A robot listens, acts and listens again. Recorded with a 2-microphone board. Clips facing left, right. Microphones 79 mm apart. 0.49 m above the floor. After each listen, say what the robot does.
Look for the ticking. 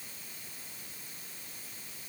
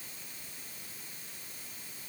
Keep listening.
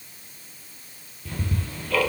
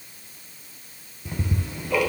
Turn 20° right.
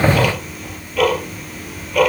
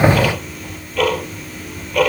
Facing the ticking.